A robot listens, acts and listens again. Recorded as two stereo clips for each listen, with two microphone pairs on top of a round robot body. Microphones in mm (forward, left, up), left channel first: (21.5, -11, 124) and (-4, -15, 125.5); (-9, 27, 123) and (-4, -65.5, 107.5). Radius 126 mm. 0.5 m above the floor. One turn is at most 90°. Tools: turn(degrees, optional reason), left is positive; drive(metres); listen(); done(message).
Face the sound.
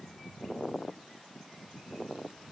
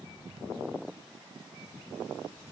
listen()
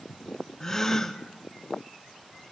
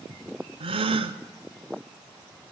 turn(degrees=-60, reason="The gasp: 60° right.")
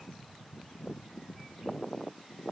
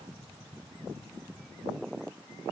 done("I heard a gasp from this way, but can't make it out now.")